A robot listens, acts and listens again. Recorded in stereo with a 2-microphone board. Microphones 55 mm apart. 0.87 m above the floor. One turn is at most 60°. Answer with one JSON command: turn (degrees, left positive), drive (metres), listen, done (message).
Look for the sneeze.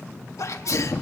{"turn": 60}
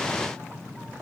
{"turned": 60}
{"listen": true}
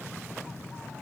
{"done": "I heard a sneeze, but can't make it out now. It was about 5° left or 55° left."}